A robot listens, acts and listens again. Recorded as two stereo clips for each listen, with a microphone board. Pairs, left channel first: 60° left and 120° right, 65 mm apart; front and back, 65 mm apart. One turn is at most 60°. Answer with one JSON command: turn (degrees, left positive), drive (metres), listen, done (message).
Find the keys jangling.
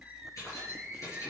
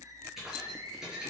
{"turn": 60}
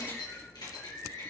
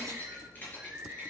{"turn": 60}
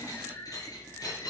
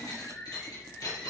{"turn": 30}
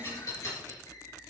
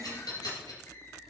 {"turn": 15}
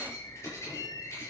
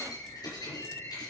{"turn": 10}
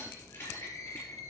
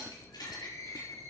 {"done": "Found it: keys jangling, straight ahead."}